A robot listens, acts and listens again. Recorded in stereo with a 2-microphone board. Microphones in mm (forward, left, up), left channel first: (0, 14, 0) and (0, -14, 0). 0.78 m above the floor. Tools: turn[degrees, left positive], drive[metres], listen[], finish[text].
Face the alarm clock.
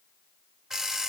Thought: The alarm clock: about 20° right or 160° right.
Action: turn[-20]
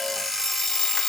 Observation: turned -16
Action: finish[Found it: an alarm clock, straight ahead.]